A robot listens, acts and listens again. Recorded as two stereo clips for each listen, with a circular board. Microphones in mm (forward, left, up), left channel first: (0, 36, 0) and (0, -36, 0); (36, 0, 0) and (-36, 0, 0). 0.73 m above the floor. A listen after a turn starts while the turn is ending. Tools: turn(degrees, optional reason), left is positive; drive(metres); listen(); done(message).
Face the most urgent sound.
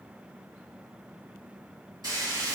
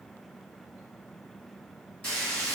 listen()
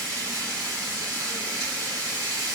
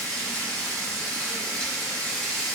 listen()
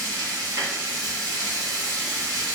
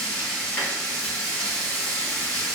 done("I can't make out anything urgent, only frying.")